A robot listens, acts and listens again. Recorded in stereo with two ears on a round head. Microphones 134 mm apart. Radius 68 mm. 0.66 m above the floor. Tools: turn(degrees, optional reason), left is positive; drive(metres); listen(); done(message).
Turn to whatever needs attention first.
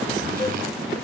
listen()
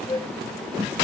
listen()
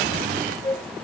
done("I can't make out anything urgent, only a flute.")